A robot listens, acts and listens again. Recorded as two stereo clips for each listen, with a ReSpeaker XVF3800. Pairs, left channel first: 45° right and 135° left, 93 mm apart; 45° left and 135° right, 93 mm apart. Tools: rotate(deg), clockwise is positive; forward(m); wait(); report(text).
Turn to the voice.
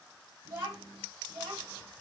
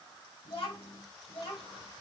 rotate(-75)
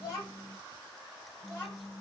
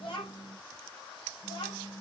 rotate(-15)
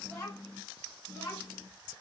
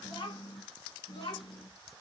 rotate(-10)
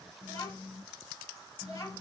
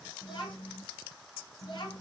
report("Found it: a child speaking, straight ahead, over 4 m away.")